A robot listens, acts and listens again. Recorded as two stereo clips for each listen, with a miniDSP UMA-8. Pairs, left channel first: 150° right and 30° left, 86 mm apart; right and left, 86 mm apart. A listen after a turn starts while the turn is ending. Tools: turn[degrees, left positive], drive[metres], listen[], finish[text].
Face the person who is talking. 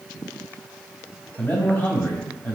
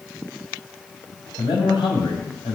Thought: The man speaking: 85° right.
Action: turn[-85]
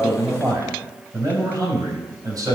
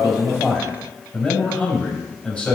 Thought: The man speaking is now 15° right.
Action: turn[-15]
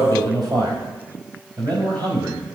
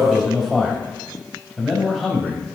Action: finish[Found it: a man speaking, straight ahead.]